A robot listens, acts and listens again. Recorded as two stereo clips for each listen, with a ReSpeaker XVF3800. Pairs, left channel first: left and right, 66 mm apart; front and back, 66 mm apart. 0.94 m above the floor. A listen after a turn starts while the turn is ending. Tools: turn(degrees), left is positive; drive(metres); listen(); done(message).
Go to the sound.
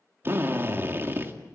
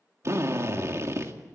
turn(degrees=-140)
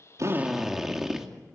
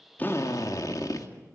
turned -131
drive(metres=1.0)
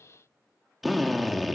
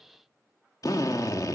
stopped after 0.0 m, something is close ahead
done("Blocked. The drill is further on, straight ahead.")